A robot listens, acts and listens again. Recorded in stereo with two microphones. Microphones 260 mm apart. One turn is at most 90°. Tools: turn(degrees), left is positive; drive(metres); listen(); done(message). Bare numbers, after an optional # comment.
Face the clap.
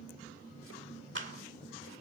# The clap: about 50° right or 130° right.
turn(-50)
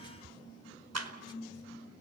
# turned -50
# So it is at 80° right.
turn(-80)
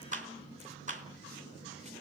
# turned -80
# The clap is now 30° right.
turn(-30)
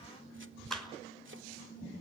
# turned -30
done("Facing the clap.")